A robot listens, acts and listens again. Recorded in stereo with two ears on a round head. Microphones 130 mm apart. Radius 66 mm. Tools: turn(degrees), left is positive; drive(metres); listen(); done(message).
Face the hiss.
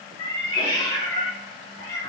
listen()
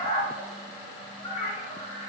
listen()
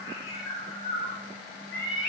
done("I can't make out a hiss, only a cat meowing.")